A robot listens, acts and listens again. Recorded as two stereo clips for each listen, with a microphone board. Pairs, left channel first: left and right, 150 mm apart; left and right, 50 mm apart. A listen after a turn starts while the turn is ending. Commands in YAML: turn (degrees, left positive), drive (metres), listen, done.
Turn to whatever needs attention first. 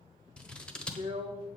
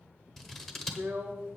listen: true
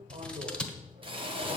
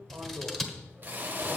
listen: true
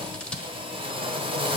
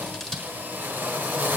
done: "I can't make out anything urgent, only a drill and scissors."